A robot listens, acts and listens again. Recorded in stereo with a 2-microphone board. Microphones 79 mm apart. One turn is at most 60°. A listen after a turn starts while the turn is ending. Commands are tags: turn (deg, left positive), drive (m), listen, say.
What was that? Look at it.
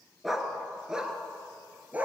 <turn deg="-20"/>
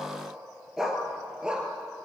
<turn deg="-30"/>
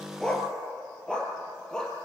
<turn deg="10"/>
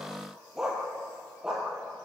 <say>Found it: a dog barking, straight ahead, over 4 m away.</say>